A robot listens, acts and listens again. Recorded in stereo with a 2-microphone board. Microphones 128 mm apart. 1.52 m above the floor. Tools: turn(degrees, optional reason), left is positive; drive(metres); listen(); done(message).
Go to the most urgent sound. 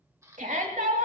turn(degrees=-90)
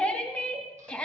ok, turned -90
turn(degrees=10, reason="So it is at 10° left.")
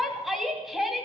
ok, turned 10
drive(metres=1.0)
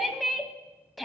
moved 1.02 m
drive(metres=1.0)
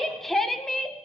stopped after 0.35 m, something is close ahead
done("Arrived at the shout, straight ahead.")